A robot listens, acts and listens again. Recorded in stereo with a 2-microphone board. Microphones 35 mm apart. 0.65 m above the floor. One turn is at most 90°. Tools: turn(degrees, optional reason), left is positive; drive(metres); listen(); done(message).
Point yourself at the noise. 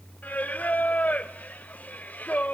turn(degrees=60, reason="The singing: about 60° left or 120° left.")
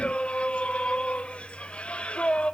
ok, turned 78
turn(degrees=40, reason="So it is at 40° left.")
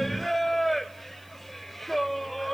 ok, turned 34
done("Facing the singing.")